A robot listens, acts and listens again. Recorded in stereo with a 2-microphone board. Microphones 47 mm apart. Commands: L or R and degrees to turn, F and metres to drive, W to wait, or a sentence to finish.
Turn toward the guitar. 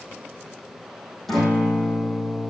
L30
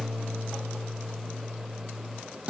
R25
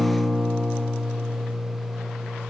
Found it: a guitar, straight ahead.